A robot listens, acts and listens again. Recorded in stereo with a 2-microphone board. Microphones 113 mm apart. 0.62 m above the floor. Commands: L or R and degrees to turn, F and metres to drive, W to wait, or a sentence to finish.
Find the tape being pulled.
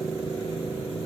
W
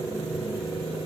W
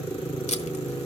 L90
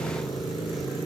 W
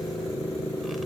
W
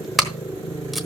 Facing the tape being pulled.